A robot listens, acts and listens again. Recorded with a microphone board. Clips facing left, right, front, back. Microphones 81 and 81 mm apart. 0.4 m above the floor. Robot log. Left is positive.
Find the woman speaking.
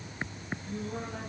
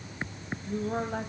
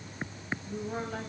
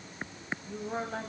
note: The woman speaking: 110° right.
cmd yaw -110
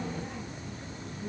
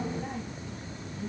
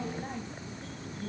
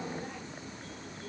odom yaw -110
cmd idle
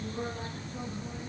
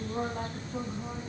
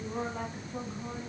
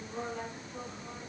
note: The woman speaking is now 65° right.
cmd yaw -65
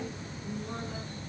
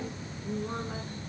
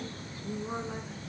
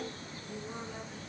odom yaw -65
note: The woman speaking is now 35° right.
cmd yaw -35
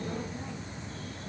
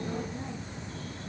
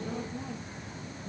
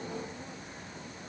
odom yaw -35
cmd idle
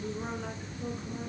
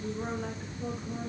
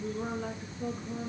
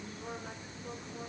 end: Found it: a woman speaking, straight ahead.